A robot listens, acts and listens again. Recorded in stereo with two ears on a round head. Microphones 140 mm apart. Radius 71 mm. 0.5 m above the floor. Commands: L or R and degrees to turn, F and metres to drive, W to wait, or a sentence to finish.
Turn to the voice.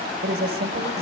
R70
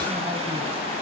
W
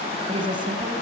R30
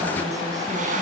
W
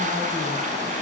W
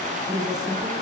R25
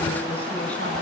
W
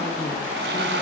W
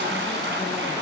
Facing where the woman speaking came from. I can't hear it now.